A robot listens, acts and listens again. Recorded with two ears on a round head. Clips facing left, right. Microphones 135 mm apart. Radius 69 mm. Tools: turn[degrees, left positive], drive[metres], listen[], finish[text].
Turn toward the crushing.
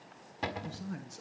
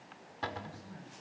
Action: listen[]
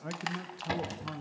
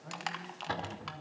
Action: turn[30]
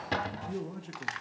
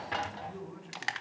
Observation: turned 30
Thought: So it is at 30° right.
Action: turn[-30]
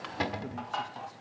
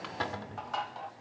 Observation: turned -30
Action: finish[Found it: crushing, straight ahead.]